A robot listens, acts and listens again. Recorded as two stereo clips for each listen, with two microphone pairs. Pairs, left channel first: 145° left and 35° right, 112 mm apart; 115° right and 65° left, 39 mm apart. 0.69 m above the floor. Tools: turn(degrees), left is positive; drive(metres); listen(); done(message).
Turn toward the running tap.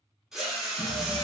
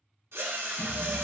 turn(degrees=-160)
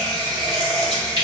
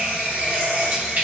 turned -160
turn(degrees=15)
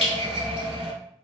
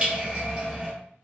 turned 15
done("Facing the running tap.")